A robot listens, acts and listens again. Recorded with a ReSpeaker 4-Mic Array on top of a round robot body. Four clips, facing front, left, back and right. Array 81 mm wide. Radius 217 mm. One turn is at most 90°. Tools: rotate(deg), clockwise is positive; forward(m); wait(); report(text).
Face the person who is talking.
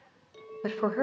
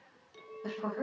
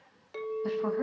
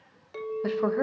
rotate(35)
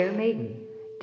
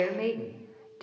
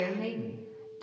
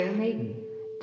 rotate(-10)
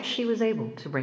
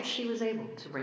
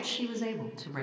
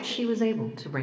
rotate(10)
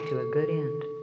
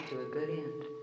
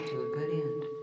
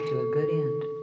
rotate(10)
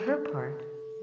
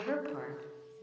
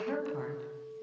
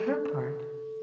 report("Found it: a woman speaking, straight ahead, 2 to 4 m away.")